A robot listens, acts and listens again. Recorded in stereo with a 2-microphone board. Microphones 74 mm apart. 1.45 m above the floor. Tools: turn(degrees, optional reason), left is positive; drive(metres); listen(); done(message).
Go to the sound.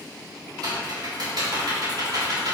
turn(degrees=-90)
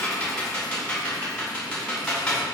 turn(degrees=15, reason="So it is at 15° left.")
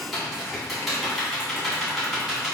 drive(metres=1.0)
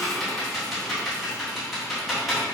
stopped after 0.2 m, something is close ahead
done("Blocked. The typing on a keyboard is further on, straight ahead.")